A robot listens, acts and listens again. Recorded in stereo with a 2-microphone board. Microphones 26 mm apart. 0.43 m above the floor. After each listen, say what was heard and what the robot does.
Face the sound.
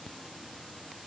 Keep listening.
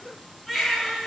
Turn 30° left.
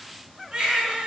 So it is at 30° right. Turn 30° right.
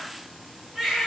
The baby crying is now 10° right. Turn 10° right.
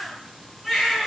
Found it: a baby crying, straight ahead.